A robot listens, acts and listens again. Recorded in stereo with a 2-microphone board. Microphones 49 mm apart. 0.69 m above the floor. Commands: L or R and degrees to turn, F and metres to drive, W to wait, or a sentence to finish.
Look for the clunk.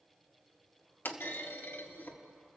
L45
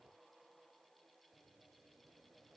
W
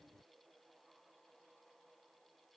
I heard a clunk, but can't make it out now. It was about straight ahead or 90° left.